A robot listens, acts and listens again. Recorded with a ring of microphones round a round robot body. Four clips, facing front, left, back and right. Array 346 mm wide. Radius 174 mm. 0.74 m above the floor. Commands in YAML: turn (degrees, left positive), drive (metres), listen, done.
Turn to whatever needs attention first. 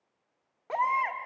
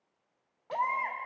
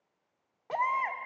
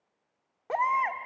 turn: -80
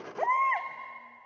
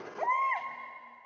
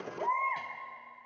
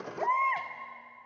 turn: -10
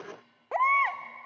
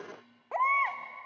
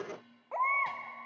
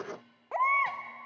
done: "Found it: a baby crying, straight ahead, 1 to 2 m away."